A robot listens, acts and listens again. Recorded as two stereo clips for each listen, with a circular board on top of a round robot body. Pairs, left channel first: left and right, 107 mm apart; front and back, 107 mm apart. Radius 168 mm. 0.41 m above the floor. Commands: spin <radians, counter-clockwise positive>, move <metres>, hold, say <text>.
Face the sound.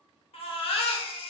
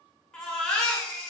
spin 1.48
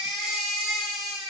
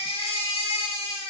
say Found it: a baby crying, straight ahead.